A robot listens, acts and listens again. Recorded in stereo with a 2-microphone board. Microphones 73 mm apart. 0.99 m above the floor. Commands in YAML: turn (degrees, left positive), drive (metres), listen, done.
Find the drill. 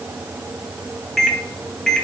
listen: true
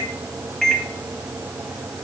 listen: true
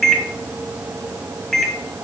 done: "I can't make out a drill, only a microwave."